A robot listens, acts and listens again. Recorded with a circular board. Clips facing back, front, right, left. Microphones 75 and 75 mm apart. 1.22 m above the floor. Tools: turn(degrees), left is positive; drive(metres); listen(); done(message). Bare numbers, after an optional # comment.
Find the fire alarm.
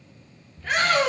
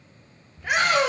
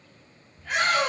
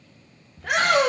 listen()
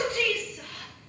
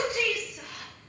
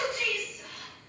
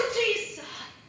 listen()
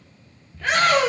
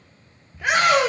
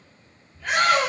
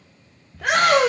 done("I can't make out a fire alarm, only a shout.")